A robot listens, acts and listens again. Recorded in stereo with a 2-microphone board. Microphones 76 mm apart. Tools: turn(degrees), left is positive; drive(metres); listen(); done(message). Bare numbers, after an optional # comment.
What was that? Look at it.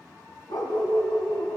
# The dog barking: about 55° left or 125° left.
turn(55)
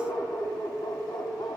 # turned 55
# So it is at 80° left.
turn(80)
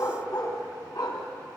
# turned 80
# The dog barking is now 60° left.
turn(60)
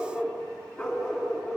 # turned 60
# The dog barking is now 10° left.
turn(10)
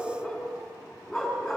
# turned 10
done("Facing the dog barking.")